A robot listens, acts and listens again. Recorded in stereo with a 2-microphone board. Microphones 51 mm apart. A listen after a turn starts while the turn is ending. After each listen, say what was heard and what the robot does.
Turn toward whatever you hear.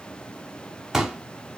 Turn 30° right.
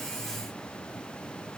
Keep listening.
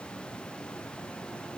I heard a pop, but can't make it out now. It was about 20° left or 140° right.